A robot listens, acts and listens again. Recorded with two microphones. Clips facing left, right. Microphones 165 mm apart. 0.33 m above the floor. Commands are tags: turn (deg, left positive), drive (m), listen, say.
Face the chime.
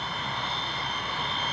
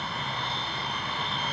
<listen/>
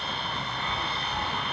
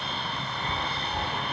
<turn deg="-35"/>
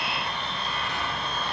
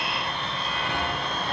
<turn deg="-110"/>
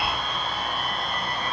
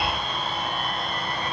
<turn deg="-25"/>
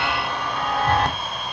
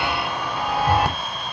<turn deg="-10"/>
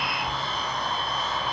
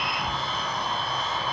<say>Facing the chime, under 1 m away.</say>